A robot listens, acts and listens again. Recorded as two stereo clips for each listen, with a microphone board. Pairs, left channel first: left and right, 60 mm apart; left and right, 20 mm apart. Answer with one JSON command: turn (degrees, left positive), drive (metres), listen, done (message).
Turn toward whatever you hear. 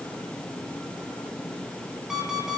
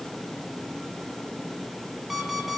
{"turn": -30}
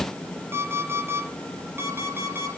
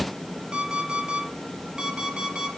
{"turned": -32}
{"turn": -140}
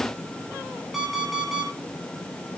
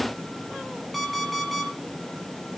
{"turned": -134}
{"done": "Facing the alarm clock, over 4 m away."}